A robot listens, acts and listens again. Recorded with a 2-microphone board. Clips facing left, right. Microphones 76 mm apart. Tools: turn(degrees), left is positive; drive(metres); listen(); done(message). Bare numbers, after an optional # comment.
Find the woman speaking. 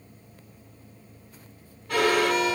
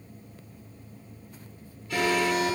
listen()
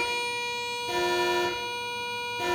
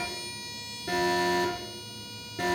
listen()
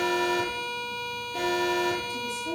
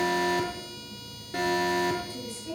# The woman speaking: about 20° left or 160° left.
turn(20)
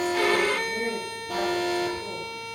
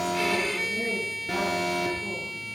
listen()
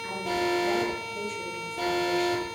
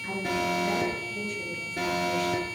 listen()
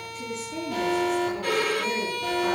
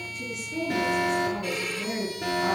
turn(30)
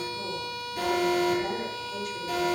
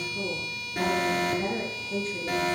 # So it is at 35° right.
turn(-35)
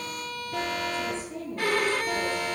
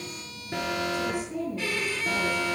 # The woman speaking is now 15° right.
turn(-15)
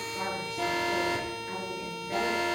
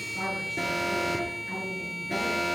done("Found it: a woman speaking, straight ahead, over 4 m away.")